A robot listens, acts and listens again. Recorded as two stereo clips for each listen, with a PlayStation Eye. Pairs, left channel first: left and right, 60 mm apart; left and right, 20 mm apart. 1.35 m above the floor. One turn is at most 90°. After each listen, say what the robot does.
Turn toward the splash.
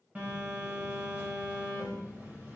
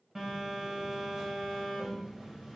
Keep listening.
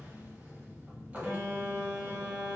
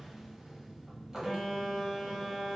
Keep listening.
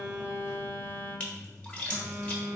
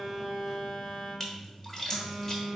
Turn 20° left.
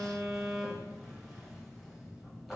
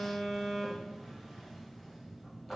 Keep listening.
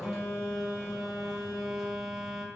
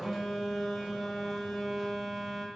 I heard a splash, but can't make it out now. It was about straight ahead or 140° left.